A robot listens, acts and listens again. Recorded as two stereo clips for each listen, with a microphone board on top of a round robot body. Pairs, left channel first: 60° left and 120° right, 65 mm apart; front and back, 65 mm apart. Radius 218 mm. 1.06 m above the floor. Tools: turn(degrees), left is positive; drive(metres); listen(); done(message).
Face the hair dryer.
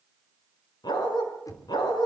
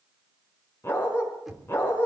listen()
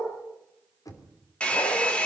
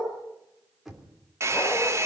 turn(degrees=135)
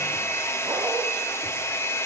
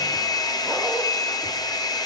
turn(degrees=10)
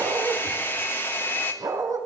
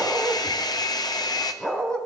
done("Found it: a hair dryer, straight ahead.")